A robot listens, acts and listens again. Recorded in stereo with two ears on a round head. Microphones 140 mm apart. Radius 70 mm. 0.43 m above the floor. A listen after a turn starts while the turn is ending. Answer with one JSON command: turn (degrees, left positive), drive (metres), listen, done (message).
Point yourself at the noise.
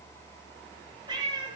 {"turn": -30}
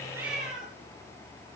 {"done": "Facing the cat meowing."}